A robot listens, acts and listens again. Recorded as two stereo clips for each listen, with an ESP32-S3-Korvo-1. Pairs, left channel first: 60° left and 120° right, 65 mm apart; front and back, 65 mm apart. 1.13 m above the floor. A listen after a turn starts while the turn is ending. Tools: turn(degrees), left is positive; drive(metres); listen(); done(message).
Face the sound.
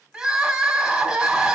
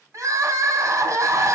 turn(degrees=165)
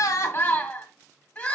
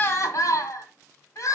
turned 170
done("Found it: crying, straight ahead.")